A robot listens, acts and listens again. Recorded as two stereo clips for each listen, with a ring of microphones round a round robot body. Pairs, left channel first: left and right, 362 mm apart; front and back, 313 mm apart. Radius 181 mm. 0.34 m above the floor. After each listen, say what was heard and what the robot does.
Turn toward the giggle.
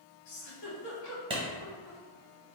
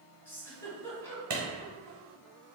The giggle: 80° left. Turn 80° left.
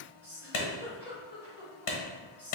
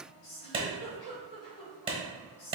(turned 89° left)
Facing the giggle, 1 to 2 m away.